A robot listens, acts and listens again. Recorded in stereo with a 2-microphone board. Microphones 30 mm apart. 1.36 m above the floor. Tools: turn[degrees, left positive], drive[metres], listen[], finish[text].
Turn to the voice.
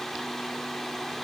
Action: listen[]
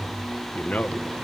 Thought: The man speaking: about 60° left or 120° left.
Action: turn[60]
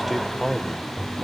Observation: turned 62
Action: finish[Facing the man speaking, 1 to 2 m away.]